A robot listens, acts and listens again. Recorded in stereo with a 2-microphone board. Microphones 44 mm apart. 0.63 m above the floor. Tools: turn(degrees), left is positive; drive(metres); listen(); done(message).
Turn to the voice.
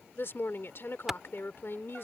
turn(degrees=55)
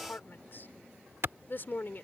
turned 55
turn(degrees=55)
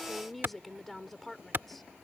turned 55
done("Facing the woman speaking.")